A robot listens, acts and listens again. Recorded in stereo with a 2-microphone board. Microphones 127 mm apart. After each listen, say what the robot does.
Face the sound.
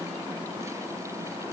Keep listening.
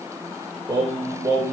Turn 25° right.
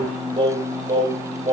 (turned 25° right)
Turn 130° right.
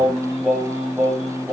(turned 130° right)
Facing the singing, over 4 m away.